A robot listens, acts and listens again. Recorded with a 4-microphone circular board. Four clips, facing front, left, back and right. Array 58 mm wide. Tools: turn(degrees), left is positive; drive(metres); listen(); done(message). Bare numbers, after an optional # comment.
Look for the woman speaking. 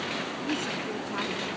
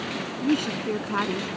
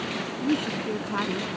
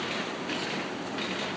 # The woman speaking: 110° left.
turn(110)
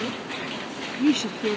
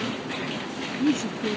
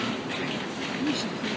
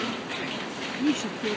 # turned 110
done("Found it: a woman speaking, straight ahead.")